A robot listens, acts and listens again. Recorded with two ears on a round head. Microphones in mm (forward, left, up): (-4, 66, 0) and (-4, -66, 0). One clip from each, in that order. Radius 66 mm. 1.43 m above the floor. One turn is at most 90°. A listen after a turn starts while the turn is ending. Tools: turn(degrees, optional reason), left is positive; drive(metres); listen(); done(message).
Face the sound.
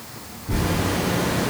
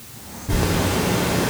turn(degrees=-55, reason="The zipper: about 55° right or 125° right.")
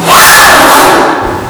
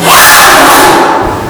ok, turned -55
done("Found it: a zipper, straight ahead, under 1 m away.")